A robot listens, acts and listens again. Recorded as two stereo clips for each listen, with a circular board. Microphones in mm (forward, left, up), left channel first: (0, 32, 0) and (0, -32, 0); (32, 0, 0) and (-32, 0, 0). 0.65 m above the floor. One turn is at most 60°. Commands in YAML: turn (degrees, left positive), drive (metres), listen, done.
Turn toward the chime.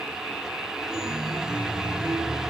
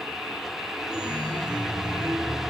turn: -60
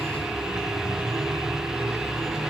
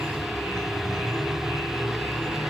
turn: -60
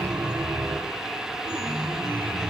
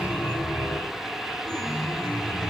turn: -60
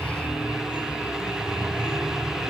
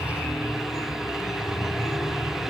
turn: -20
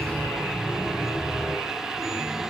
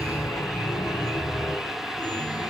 done: "Found it: a chime, straight ahead, over 4 m away."